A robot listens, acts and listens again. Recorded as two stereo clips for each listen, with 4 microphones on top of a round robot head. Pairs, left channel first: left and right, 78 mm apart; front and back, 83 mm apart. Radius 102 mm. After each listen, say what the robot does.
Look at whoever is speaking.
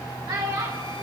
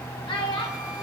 Turn 35° right.
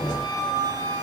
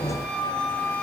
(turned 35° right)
Keep listening.
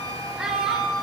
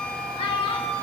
Keep listening.
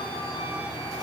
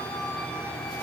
I heard a child speaking from this way, but can't make it out now.